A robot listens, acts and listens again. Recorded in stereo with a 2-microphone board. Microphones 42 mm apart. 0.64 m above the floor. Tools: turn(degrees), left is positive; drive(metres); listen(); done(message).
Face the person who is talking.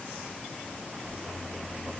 listen()
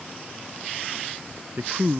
turn(degrees=-50)
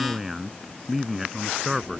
done("Found it: a man speaking, straight ahead.")